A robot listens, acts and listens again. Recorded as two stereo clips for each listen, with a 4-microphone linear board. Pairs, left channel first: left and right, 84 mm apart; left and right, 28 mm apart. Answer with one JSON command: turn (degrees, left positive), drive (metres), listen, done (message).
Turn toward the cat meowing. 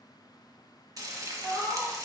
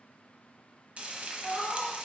{"turn": 30}
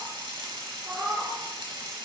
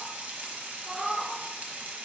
{"turn": -50}
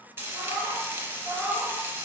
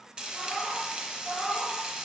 {"turn": -20}
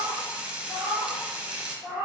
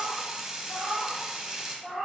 {"turn": -10}
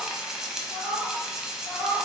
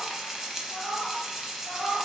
{"done": "Facing the cat meowing, 2 to 4 m away."}